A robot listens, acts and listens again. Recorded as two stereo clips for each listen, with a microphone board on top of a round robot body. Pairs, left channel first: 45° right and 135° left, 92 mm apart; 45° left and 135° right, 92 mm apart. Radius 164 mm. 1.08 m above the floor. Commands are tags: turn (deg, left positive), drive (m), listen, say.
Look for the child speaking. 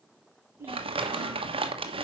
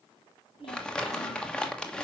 <turn deg="70"/>
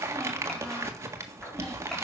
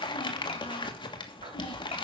<listen/>
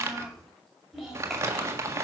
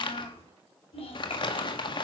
<turn deg="50"/>
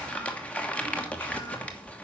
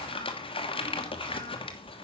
<listen/>
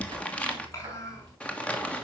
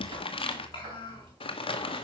<turn deg="10"/>
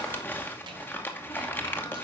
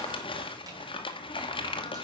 <listen/>
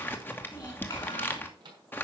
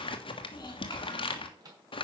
<say>Facing the child speaking.</say>